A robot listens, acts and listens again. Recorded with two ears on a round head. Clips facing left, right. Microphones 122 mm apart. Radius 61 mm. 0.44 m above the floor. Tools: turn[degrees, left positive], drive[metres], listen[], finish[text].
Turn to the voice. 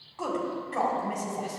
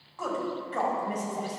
Action: turn[30]
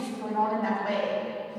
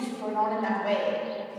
Thought: So it is at 30° right.
Action: turn[-30]
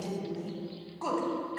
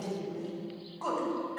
Action: finish[Found it: a woman speaking, straight ahead, 2 to 4 m away.]